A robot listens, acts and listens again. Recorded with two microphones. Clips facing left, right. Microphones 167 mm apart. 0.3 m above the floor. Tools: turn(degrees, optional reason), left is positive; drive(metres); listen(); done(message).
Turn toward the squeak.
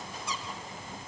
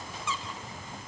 turn(degrees=40, reason="The squeak: about 40° left or 140° left.")
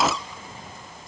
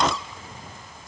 done("Found it: a squeak, straight ahead.")